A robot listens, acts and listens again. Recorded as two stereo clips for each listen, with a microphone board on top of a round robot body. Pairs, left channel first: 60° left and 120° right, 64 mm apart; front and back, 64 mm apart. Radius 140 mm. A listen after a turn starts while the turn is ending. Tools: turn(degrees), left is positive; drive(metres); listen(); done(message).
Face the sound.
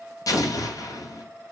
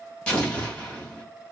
turn(degrees=70)
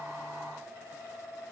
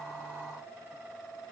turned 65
done("Facing where the explosion came from. I can't hear it now.")